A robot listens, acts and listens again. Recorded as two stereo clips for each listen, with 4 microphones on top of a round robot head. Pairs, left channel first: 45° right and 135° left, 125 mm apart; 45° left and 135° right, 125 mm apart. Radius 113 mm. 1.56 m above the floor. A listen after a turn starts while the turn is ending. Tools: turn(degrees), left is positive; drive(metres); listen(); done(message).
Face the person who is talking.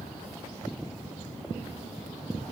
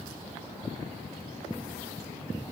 listen()
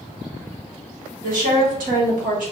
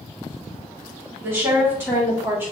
turn(degrees=150)
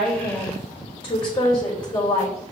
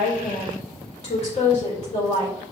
done("Found it: a woman speaking, straight ahead.")